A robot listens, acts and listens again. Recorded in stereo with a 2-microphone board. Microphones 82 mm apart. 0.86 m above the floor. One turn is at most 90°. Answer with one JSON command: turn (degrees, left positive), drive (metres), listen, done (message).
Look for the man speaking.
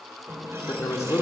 {"turn": 40}
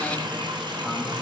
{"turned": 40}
{"listen": true}
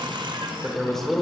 {"done": "Facing the man speaking."}